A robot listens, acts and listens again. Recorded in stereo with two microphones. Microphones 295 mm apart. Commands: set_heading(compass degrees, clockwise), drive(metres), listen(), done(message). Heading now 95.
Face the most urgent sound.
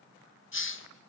listen()
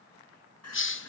set_heading(35)
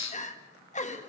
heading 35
set_heading(5)
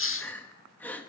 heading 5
done("Facing the crying, 1 to 2 m away.")